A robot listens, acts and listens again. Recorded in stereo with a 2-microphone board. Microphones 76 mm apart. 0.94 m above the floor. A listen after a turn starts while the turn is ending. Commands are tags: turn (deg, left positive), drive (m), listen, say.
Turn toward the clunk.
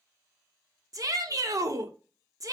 <listen/>
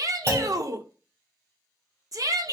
<turn deg="-40"/>
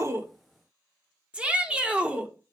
<listen/>
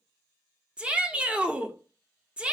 <say>I heard a clunk, but can't make it out now. It was about straight ahead or 100° right.</say>